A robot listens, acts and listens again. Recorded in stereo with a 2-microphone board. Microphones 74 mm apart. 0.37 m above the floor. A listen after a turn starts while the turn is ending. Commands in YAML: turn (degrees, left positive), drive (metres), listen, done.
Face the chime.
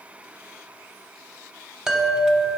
turn: -30
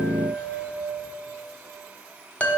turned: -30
turn: 20
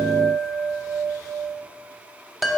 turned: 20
done: "Facing the chime, under 1 m away."